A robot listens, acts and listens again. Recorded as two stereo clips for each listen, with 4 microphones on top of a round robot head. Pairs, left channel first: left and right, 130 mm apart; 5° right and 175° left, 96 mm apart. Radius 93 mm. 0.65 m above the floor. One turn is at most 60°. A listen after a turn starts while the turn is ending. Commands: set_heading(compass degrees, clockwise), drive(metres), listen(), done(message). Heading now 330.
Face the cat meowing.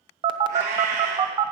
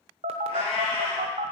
set_heading(25)
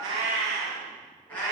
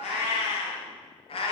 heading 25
set_heading(15)
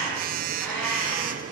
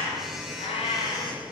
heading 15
done("Facing the cat meowing, 2 to 4 m away.")